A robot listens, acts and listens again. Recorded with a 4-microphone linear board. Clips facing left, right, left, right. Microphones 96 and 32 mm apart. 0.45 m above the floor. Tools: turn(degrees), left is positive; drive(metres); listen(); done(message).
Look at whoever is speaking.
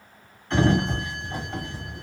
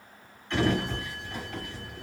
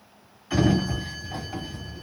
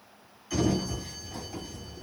listen()
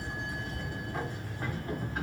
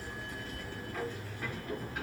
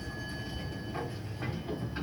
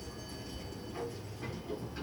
listen()
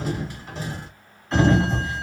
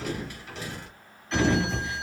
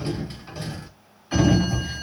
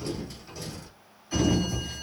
done("I can't make out anyone speaking, only a sliding door.")